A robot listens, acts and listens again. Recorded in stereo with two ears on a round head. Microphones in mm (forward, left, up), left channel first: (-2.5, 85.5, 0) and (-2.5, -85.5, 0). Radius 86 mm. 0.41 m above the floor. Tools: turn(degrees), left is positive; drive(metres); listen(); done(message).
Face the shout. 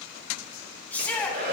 turn(degrees=30)
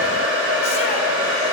listen()
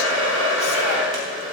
listen()
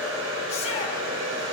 done("I heard a shout, but can't make it out now. It was about 20° right or 140° left.")